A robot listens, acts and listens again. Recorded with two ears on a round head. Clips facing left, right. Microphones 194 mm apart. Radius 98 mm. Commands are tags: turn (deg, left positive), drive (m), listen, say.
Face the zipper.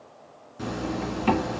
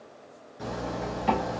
<turn deg="60"/>
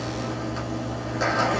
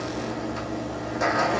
<say>Facing the zipper.</say>